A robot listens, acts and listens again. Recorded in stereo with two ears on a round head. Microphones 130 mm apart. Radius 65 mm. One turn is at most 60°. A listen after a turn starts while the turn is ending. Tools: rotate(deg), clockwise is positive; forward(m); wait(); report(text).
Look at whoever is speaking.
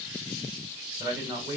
rotate(20)
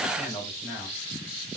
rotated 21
report("Facing the man speaking.")